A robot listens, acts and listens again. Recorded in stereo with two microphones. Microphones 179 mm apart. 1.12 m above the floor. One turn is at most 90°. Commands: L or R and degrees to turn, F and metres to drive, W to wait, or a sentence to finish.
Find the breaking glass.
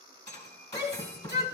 L45
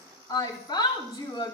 W
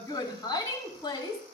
I heard breaking glass, but can't make it out now. It was about straight ahead or 90° left.